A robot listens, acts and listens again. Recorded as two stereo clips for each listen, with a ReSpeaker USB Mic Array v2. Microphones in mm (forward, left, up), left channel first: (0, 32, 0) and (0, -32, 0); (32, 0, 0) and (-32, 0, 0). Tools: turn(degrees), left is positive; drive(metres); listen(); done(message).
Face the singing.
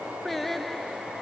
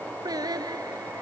turn(degrees=175)
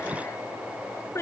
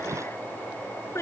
turn(degrees=45)
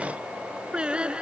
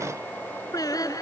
turn(degrees=-15)
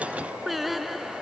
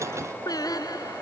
done("Found it: singing, straight ahead.")